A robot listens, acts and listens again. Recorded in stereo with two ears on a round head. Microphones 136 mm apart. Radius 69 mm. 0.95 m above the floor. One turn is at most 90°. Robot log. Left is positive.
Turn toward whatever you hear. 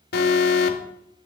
note: The alarm: about 75° left or 105° left.
cmd yaw +75
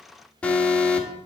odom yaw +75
note: So it is at 10° left.
cmd yaw +10
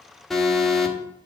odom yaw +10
end: Found it: an alarm, straight ahead.